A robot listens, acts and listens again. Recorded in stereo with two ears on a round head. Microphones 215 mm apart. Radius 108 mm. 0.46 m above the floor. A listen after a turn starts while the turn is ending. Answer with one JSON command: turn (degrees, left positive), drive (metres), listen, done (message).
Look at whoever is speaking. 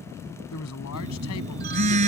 {"turn": 75}
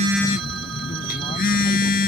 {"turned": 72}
{"listen": true}
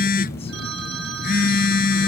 {"listen": true}
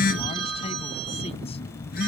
{"done": "I heard a man speaking, but can't make it out now. It was about straight ahead or 35° left."}